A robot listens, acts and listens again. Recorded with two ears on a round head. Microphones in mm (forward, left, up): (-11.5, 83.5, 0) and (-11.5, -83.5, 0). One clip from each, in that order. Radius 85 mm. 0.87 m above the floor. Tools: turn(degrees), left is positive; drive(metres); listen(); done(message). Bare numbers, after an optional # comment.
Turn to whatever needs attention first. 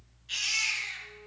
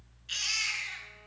# The baby crying: about 35° right or 145° right.
turn(-35)
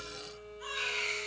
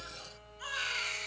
# So it is at 110° right.
turn(-110)
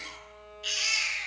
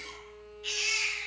# The baby crying is now 25° left.
turn(25)
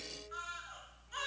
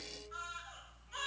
done("Facing the baby crying.")